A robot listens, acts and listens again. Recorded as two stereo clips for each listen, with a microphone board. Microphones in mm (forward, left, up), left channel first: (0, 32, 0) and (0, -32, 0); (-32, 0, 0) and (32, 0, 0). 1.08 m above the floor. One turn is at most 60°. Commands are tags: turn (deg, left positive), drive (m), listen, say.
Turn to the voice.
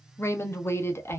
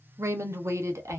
<turn deg="40"/>
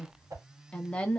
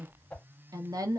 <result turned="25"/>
<turn deg="20"/>
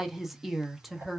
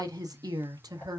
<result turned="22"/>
<say>Facing the woman speaking.</say>